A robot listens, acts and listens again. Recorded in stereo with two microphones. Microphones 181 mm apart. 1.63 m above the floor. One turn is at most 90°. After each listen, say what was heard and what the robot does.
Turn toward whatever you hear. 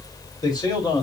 The man speaking: about 20° left or 160° left. Turn 20° left.
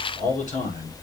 So it is at 135° left. Turn 90° left.
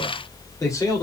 The man speaking is now 15° left. Turn 15° left.
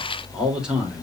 Found it: a man speaking, straight ahead, 2 to 4 m away.